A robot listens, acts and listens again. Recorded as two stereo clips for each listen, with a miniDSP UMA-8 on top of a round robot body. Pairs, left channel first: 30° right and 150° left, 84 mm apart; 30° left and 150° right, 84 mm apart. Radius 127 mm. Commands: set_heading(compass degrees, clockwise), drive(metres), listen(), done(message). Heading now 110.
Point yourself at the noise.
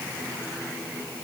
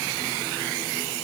listen()
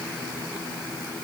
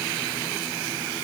listen()
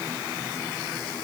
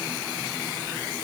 done("I can't make out anything to turn to.")